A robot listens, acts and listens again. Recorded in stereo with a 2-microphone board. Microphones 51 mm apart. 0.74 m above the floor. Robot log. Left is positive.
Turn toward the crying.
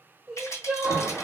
cmd yaw -30
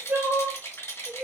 note: So it is at 135° right.
cmd yaw -135
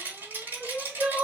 note: The crying is now 30° right.
cmd yaw -30
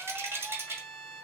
cmd idle
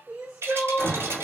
note: The crying is now 15° right.
cmd yaw -15
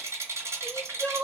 end: Facing the crying, 1 to 2 m away.